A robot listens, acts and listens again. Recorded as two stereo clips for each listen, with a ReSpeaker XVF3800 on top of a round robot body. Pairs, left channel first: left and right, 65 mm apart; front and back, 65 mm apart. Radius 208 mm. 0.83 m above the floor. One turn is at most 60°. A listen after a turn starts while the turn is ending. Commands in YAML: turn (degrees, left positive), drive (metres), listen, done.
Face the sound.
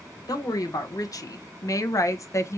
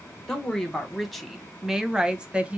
turn: 60
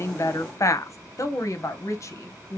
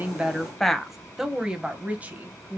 turn: 60
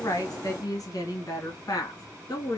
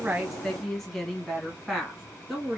turn: 60
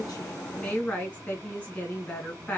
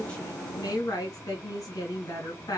turn: 25
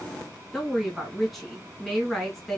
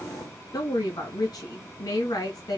done: "Facing the woman speaking."